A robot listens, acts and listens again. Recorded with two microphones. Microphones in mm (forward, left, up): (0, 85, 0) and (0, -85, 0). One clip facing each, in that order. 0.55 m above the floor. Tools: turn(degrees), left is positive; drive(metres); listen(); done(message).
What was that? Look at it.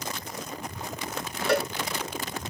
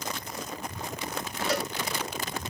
turn(degrees=60)
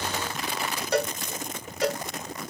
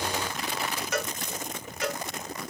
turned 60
turn(degrees=40)
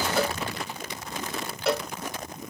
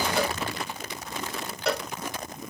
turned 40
done("Found it: a cowbell, straight ahead.")